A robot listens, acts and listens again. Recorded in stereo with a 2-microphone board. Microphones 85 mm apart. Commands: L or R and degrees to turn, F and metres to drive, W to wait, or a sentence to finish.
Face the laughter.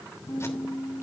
W
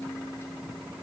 W
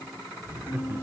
R25
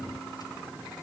W
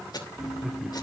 Facing the laughter, 1 to 2 m away.